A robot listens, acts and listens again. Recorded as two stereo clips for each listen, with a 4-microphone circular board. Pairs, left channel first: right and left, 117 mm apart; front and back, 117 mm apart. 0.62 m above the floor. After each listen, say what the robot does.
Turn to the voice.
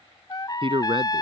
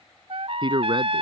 Turn 135° left.
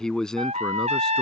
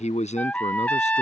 Found it: a man speaking, straight ahead.